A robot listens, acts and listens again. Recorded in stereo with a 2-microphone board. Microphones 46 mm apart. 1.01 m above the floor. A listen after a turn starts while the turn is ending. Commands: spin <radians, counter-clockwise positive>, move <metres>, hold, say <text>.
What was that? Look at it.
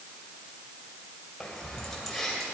spin -0.52
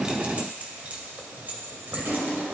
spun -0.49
spin -2.27
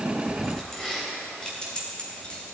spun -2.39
spin 0.44
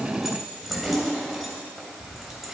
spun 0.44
say Facing the keys jangling, 2 to 4 m away.